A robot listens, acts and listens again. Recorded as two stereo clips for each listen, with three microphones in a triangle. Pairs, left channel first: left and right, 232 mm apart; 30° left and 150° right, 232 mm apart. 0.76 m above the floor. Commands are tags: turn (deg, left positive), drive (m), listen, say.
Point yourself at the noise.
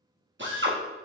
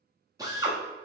<turn deg="-80"/>
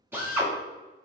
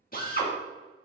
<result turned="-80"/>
<turn deg="-10"/>
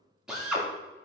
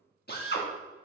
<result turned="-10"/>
<say>Found it: a drill, straight ahead.</say>